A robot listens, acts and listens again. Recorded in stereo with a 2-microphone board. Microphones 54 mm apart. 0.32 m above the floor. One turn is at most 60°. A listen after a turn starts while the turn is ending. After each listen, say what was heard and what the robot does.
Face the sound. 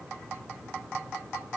Keep listening.
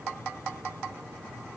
Keep listening.
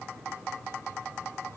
I can't make out anything.